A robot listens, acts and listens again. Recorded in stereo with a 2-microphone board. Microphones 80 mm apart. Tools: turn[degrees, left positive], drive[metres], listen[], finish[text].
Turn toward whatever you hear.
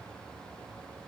Action: listen[]
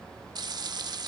Thought: The frying: about 55° right or 125° right.
Action: turn[-55]
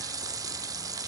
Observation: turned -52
Thought: So it is at 55° right.
Action: turn[-55]
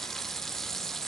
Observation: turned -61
Action: finish[Facing the frying.]